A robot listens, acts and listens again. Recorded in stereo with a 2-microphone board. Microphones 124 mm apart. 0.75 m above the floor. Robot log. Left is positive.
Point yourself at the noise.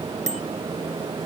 note: The bicycle bell: about 65° right or 115° right.
cmd yaw -65
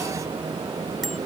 cmd idle
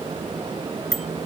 end: Facing the bicycle bell.